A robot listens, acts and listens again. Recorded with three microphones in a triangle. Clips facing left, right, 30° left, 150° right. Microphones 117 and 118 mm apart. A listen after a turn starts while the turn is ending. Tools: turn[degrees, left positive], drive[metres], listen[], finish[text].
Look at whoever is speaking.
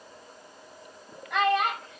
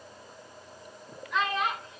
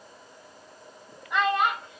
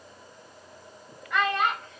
Thought: The child speaking: 105° left.
Action: turn[105]
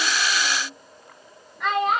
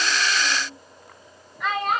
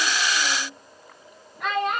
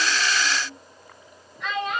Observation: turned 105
Action: finish[Found it: a child speaking, straight ahead, 2 to 4 m away.]